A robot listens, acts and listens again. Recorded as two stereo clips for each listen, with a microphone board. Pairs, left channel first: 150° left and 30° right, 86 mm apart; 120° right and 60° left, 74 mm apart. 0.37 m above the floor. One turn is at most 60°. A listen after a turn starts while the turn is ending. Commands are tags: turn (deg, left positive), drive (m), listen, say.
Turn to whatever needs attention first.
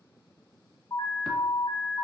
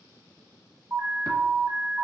<turn deg="60"/>
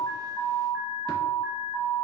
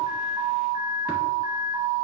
<turn deg="15"/>
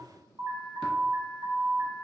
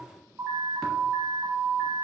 <say>Facing the alarm.</say>